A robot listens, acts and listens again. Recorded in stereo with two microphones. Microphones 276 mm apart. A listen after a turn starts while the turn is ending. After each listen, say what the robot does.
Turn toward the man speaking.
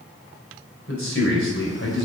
Turn 50° left.
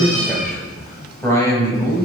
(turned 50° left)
Turn 15° left.
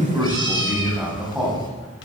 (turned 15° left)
Facing the man speaking, over 4 m away.